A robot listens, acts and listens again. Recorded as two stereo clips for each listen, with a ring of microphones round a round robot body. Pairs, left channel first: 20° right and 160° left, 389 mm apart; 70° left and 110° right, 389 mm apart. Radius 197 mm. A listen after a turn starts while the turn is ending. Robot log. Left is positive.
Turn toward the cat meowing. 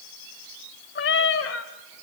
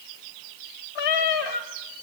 note: The cat meowing: 35° left.
cmd yaw +35
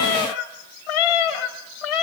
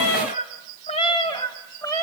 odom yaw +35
note: The cat meowing is now 15° right.
cmd yaw -15
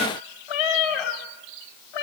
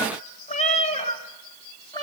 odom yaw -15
note: The cat meowing is now 15° right.
cmd yaw -15
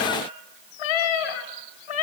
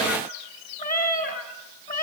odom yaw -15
end: Found it: a cat meowing, straight ahead, 2 to 4 m away.